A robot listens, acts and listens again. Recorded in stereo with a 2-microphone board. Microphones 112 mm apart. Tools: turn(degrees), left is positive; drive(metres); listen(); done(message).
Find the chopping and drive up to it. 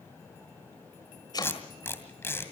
turn(degrees=40)
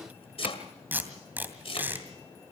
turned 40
turn(degrees=90)
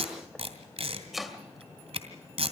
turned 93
drive(metres=1.0)
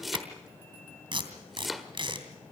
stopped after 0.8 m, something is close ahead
done("Arrived at the chopping, straight ahead.")